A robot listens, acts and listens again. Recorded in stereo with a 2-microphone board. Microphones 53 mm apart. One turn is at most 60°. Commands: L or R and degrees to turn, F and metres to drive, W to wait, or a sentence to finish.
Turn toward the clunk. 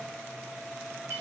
W
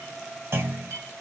R50
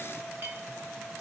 W
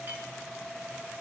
I heard a clunk, but can't make it out now. It was about straight ahead or 80° right.